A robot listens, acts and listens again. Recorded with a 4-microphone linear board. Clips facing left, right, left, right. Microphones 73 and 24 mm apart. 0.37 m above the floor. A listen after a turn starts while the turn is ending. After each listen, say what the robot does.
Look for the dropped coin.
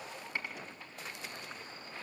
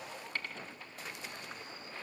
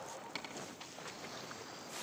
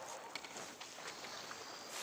Turn 30° left.
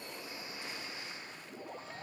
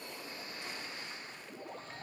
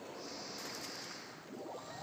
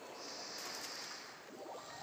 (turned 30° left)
Keep listening.
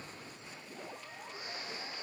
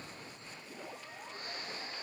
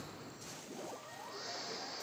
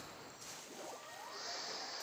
I heard a dropped coin, but can't make it out now. It was about 15° right or 135° left.